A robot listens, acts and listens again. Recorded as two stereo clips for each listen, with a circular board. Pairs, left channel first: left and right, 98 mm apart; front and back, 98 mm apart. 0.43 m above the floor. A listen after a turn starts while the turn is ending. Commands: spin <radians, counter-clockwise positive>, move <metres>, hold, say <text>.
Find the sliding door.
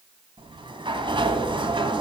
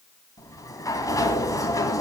spin -0.96
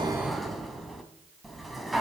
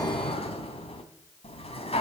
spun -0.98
say Facing the sliding door.